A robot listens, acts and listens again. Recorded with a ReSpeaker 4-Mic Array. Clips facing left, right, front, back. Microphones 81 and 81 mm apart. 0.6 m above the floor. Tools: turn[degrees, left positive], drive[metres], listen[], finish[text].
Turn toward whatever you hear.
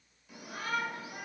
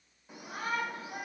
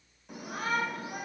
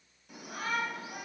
Thought: The shout: 30° right.
Action: turn[-30]
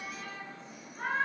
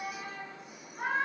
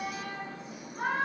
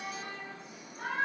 Thought: The shout is now 10° right.
Action: turn[-10]
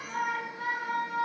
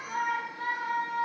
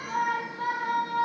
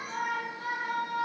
Action: finish[Found it: a shout, straight ahead.]